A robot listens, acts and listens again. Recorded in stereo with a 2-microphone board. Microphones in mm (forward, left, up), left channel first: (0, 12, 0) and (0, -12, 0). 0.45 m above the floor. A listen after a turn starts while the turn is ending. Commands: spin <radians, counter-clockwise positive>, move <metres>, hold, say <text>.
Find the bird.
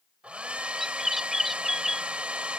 spin -0.26
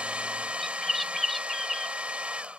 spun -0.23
say Facing the bird.